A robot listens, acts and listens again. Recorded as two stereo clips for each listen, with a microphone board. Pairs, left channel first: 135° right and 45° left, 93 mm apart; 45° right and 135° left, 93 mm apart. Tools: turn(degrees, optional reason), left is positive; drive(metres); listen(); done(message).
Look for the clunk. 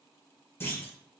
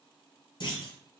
turn(degrees=-70, reason="The clunk: 70° right.")
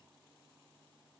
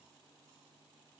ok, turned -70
done("I heard a clunk from this way, but can't make it out now.")